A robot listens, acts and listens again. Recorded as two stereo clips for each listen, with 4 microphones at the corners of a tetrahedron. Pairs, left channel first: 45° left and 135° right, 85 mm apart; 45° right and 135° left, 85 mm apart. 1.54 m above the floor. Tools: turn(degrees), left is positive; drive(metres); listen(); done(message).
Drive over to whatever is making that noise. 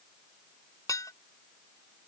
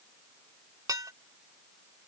turn(degrees=90)
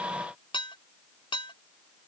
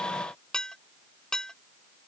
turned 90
turn(degrees=35)
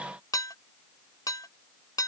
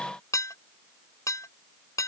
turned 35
drive(metres=1.0)
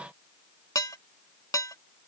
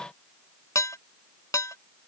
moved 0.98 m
drive(metres=1.0)
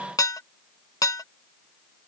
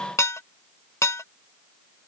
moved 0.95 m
drive(metres=1.0)
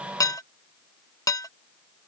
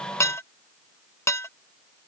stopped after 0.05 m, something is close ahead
done("I am next to the dishes clattering.")